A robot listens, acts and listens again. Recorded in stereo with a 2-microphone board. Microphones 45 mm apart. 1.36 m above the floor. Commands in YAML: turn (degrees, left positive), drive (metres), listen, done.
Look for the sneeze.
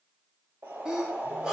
turn: -30
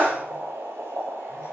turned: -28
turn: -140
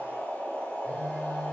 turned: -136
done: "Facing where the sneeze came from. I can't hear it now."